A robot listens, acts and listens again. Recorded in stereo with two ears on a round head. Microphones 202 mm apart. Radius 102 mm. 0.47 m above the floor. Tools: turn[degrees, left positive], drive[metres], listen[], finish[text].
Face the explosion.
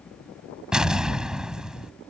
Action: turn[-30]
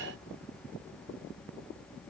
Action: listen[]
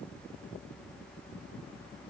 Action: finish[I heard an explosion, but can't make it out now. It was about 25° left or 145° right.]